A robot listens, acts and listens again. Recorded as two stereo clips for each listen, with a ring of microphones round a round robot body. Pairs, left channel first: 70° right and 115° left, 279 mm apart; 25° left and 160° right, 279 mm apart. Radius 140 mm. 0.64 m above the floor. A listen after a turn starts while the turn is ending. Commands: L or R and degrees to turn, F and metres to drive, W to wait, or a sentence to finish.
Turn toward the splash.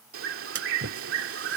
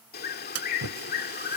L165
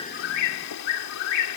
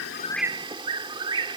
Facing where the splash came from. I can't hear it now.